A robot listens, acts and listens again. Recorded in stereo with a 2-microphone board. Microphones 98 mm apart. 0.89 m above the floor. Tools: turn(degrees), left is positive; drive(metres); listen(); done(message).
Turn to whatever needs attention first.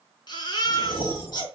turn(degrees=50)
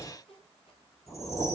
listen()
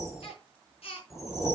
turn(degrees=80)
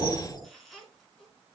listen()
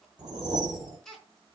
done("Facing the baby crying, over 4 m away.")